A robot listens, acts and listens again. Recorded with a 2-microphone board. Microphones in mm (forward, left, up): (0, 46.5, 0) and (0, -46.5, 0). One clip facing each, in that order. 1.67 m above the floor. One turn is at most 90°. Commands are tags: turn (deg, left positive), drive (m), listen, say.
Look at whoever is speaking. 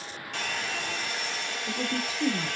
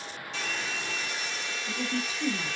<turn deg="55"/>
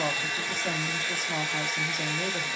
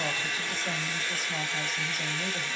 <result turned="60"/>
<turn deg="65"/>
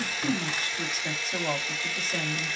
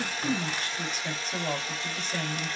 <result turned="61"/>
<say>Facing the woman speaking.</say>